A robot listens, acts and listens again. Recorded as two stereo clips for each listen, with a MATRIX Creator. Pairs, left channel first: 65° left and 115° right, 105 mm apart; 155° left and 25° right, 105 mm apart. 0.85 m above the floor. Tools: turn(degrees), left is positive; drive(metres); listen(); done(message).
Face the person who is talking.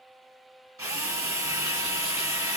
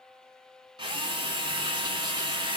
listen()
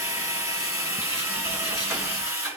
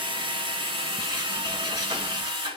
listen()
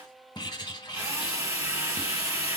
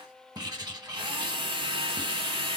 done("I can't make out anyone speaking to turn to.")